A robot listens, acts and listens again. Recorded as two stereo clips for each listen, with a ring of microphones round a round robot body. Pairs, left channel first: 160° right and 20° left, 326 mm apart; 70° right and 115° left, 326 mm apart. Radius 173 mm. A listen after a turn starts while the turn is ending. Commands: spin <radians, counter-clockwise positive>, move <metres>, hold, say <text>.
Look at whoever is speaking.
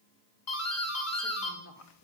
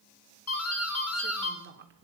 spin 2.88
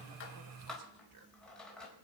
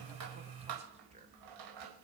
spin 0.70
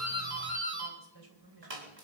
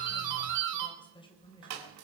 spin 0.17
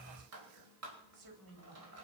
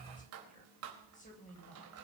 say Facing the woman speaking, over 4 m away.